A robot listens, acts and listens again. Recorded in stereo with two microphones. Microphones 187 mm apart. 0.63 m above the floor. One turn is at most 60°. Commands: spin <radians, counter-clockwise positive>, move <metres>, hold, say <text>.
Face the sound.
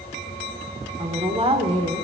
spin -0.52
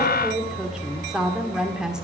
say Facing the woman speaking, 1 to 2 m away.